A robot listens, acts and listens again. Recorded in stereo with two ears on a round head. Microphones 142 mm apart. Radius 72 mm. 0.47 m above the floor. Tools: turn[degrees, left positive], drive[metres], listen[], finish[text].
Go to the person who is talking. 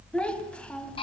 Action: turn[30]
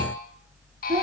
Thought: So it is at 25° right.
Action: turn[-25]
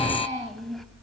Action: drive[1.0]
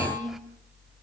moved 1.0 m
Action: drive[1.0]
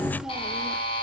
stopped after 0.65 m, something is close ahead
Action: listen[]
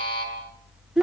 Action: finish[I am next to the child speaking.]